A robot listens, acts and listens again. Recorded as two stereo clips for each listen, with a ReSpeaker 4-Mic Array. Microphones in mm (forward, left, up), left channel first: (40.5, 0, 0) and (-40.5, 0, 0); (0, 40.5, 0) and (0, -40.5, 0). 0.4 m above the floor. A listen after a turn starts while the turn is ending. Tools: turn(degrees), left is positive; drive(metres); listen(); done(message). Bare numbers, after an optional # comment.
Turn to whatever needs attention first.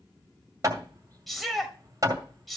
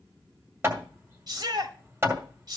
# The shout: 90° right.
turn(-90)
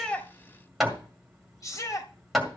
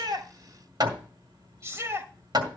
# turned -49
# The shout is now 40° right.
turn(-40)
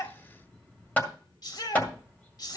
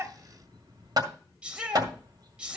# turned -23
# The shout is now 15° right.
turn(-15)
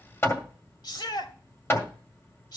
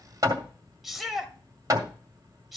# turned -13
done("Found it: a shout, straight ahead.")